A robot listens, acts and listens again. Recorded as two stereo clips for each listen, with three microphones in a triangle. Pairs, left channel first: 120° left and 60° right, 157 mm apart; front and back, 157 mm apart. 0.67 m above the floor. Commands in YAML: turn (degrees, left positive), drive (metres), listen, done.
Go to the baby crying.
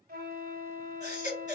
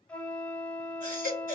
turn: 160
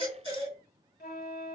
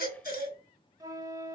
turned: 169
turn: -10
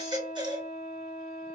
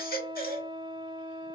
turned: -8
drive: 1.0
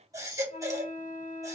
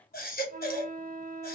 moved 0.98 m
turn: 10
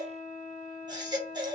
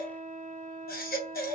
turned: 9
drive: 1.0
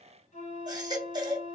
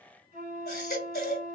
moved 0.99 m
drive: 1.0
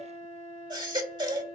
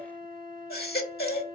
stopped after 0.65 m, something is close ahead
done: "I am next to the baby crying."